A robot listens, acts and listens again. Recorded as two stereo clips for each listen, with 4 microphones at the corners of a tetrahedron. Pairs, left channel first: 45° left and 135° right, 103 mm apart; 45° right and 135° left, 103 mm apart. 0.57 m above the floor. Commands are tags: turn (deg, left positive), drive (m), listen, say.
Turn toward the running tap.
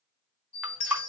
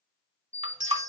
<turn deg="145"/>
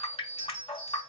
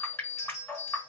<turn deg="25"/>
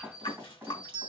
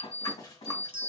<listen/>
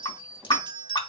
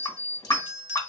<say>Facing the running tap, 1 to 2 m away.</say>